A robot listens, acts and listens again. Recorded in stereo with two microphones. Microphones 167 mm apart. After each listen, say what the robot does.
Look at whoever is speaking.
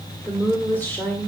Turn 30° left.
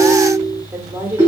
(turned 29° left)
Turn 15° right.
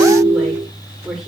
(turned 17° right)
Found it: a woman speaking, straight ahead.